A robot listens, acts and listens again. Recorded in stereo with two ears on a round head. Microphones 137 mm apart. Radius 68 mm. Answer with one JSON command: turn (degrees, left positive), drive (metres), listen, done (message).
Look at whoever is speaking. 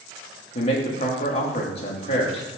{"turn": 40}
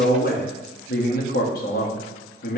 {"turn": 90}
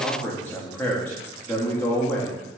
{"turn": 15}
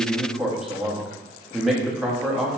{"done": "Facing the man speaking, 1 to 2 m away."}